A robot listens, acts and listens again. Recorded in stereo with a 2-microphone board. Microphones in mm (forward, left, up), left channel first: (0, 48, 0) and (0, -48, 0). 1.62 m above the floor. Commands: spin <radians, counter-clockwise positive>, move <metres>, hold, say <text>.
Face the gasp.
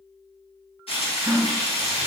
spin -1.05
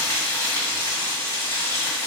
hold
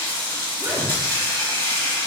say I heard a gasp, but can't make it out now. It was about straight ahead or 60° right.